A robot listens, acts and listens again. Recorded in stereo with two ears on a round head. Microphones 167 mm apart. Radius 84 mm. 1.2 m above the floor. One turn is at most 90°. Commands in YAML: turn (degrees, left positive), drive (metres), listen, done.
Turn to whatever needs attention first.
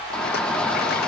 turn: 30
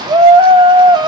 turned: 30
turn: -25
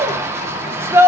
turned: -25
turn: -15
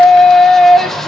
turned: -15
done: "Found it: a shout, straight ahead, 1 to 2 m away."